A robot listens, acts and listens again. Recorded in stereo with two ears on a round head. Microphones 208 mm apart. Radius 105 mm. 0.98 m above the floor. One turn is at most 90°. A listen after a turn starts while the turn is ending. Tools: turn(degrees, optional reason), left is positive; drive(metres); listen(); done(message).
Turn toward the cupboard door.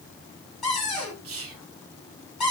turn(degrees=30)
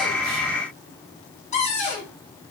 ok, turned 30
turn(degrees=90, reason="So it is at 150° left.")
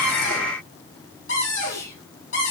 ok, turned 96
turn(degrees=55, reason="The cupboard door is now 55° left.")
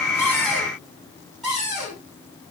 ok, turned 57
done("Facing the cupboard door, 2 to 4 m away.")